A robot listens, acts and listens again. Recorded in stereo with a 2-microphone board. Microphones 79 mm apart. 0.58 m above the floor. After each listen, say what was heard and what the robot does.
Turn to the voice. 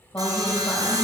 The woman speaking: about 25° left or 155° left. Turn 25° left.
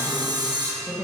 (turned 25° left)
Facing the woman speaking, 2 to 4 m away.